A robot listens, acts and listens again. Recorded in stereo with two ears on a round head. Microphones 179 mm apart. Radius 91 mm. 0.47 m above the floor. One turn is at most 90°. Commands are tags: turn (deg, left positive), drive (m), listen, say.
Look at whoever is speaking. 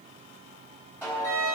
<listen/>
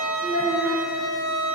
<turn deg="70"/>
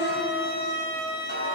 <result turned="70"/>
<listen/>
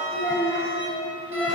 <turn deg="15"/>
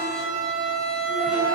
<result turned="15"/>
<listen/>
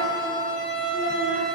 <listen/>
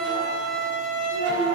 <say>Found it: a child speaking, straight ahead.</say>